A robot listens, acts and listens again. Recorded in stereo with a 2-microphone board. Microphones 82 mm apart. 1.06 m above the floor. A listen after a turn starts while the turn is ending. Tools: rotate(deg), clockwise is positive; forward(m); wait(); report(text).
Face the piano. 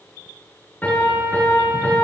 rotate(-20)
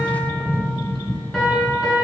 report("Facing the piano, over 4 m away.")